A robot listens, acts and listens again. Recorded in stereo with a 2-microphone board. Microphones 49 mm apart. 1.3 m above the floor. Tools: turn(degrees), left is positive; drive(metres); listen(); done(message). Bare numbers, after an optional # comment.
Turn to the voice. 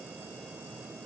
listen()
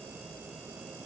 listen()
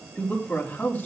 # The man speaking: about 35° left or 145° left.
turn(35)
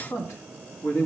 # So it is at 105° left.
turn(105)
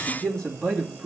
# The man speaking is now 15° left.
turn(15)
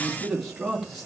done("Facing the man speaking.")